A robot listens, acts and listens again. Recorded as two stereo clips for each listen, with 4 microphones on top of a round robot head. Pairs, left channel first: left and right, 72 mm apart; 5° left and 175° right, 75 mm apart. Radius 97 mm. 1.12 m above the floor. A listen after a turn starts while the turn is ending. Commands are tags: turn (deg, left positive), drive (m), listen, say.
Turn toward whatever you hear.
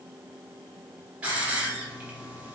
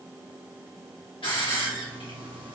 <turn deg="-20"/>
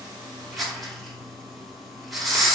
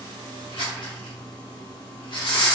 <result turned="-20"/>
<say>Found it: a hiss, straight ahead, 1 to 2 m away.</say>